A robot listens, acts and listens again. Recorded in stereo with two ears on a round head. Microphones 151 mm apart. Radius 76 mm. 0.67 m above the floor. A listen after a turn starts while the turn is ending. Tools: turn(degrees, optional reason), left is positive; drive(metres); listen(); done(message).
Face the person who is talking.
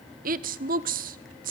turn(degrees=-55, reason="The woman speaking: about 55° right or 125° right.")
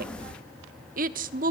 turn(degrees=-60, reason="So it is at 60° right.")
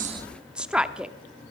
done("Found it: a woman speaking, straight ahead, 1 to 2 m away.")